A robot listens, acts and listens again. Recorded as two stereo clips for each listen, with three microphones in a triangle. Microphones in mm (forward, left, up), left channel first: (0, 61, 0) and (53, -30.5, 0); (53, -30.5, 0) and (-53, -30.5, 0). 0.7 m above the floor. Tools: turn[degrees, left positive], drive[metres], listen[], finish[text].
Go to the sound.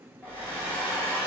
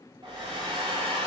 Thought: The hair dryer: 130° right.
Action: turn[-130]
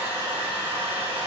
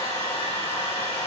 Thought: The hair dryer is now 15° left.
Action: turn[15]
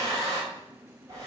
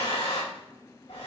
Action: drive[1.0]
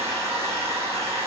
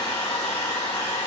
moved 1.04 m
Action: drive[1.0]
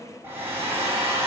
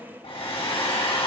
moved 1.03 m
Action: drive[1.0]
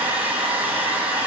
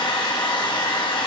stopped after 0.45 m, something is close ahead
Thought: The hair dryer is now 10° left.
Action: turn[10]
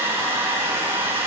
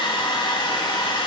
Action: finish[Arrived at the hair dryer, straight ahead.]